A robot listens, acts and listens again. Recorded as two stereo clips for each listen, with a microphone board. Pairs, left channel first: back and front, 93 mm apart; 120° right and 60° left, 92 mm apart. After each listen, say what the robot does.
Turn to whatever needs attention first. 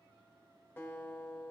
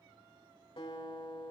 Keep listening.
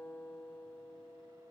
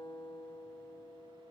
Keep listening.
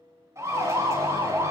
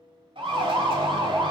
Turn 55° left.
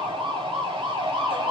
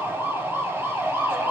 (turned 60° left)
Found it: a siren, straight ahead, 2 to 4 m away.